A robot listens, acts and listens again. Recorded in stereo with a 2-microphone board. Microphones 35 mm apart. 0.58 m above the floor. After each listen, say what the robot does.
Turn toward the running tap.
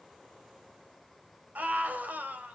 Keep listening.
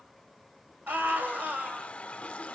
Turn 35° left.
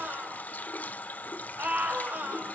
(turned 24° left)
Turn 115° left.
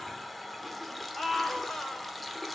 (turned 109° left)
Found it: a running tap, straight ahead, 1 to 2 m away.